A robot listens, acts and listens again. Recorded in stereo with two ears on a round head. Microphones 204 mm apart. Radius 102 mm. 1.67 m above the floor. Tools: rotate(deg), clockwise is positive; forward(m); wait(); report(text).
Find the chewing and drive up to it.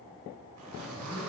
wait()
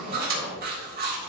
rotate(40)
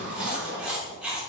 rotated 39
forward(1.0)
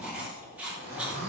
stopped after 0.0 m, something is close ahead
report("Blocked. The chewing is further on, straight ahead.")